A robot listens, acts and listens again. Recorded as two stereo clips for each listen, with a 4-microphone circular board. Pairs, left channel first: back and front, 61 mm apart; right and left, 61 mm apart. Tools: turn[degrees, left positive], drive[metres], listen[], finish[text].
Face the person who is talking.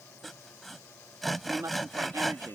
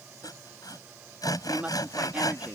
Thought: The woman speaking: 25° left.
Action: turn[25]
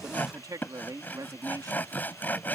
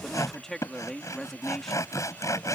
Action: finish[Found it: a woman speaking, straight ahead.]